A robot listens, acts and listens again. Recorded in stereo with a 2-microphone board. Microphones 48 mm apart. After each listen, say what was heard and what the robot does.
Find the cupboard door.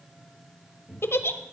Turn 30° left.
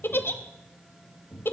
So it is at 150° left. Turn 150° left.
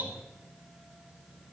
Keep listening.
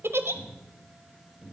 Found it: a cupboard door, straight ahead, 2 to 4 m away.